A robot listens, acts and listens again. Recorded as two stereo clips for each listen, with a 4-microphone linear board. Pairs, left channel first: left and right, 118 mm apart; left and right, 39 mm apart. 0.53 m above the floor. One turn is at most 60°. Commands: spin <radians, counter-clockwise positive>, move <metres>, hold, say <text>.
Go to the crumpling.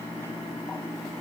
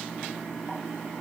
hold
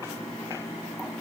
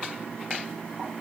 hold
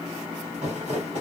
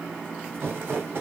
spin -1.05
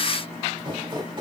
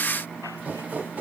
spin -0.79
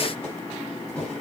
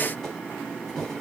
spin 0.17
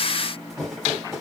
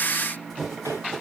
move 1.0
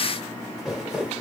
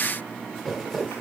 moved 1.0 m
move 1.0
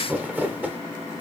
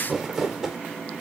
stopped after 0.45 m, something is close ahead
spin -0.26
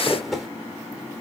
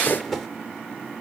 say I am next to the crumpling.